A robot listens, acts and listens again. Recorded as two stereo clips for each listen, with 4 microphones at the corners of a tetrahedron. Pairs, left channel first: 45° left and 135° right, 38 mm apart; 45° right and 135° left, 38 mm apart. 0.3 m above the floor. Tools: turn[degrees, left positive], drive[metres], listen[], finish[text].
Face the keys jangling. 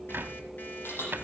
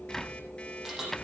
Thought: The keys jangling: 55° left.
Action: turn[55]
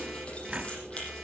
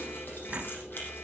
Action: listen[]
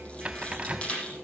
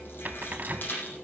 Thought: The keys jangling is now 15° right.
Action: turn[-15]
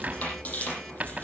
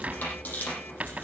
Action: finish[Facing the keys jangling, over 4 m away.]